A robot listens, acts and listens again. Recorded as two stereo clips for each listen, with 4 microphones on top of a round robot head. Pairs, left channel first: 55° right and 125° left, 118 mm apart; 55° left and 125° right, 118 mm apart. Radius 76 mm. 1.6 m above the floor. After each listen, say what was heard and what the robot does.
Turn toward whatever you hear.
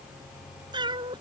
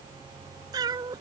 The cat meowing: straight behind. Turn 180° left.
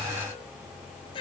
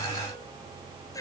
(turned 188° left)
Found it: a cat meowing, straight ahead.